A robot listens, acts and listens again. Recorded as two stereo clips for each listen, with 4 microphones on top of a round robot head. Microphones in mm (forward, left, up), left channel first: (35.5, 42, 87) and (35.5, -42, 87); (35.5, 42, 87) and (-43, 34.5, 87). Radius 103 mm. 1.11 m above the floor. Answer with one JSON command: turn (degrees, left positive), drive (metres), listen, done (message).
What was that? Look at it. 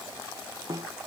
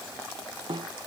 {"turn": -140}
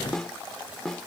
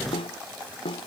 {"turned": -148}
{"done": "Found it: a snare drum, straight ahead."}